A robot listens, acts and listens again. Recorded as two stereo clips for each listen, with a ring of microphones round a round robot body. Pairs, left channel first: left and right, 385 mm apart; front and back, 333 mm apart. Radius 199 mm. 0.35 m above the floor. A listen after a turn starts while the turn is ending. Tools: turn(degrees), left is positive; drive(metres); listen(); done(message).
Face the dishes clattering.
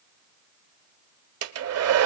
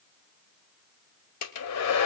listen()
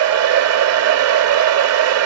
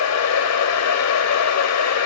listen()
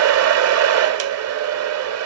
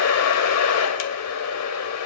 done("I can't make out dishes clattering to turn to.")